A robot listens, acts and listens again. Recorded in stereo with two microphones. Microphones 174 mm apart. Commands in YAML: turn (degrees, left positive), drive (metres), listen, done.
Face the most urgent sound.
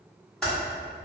listen: true
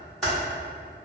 listen: true
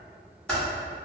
done: "I can't make out anything urgent to turn to."